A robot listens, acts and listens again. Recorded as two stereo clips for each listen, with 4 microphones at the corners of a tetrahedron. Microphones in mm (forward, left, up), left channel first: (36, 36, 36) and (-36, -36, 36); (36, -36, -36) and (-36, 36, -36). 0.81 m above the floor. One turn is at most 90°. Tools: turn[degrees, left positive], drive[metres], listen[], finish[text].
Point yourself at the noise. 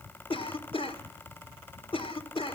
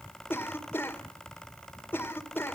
Thought: The cough: 25° left.
Action: turn[25]
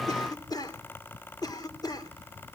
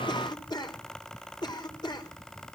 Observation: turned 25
Action: finish[Facing the cough, 2 to 4 m away.]